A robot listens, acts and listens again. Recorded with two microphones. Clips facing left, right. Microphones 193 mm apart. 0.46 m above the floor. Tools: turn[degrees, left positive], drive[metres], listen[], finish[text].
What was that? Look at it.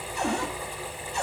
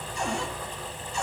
Thought: The cupboard door: about 60° left or 120° left.
Action: turn[60]
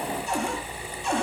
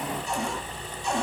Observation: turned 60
Thought: So it is at 60° left.
Action: turn[60]
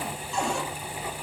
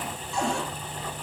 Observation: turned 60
Action: finish[Facing the cupboard door.]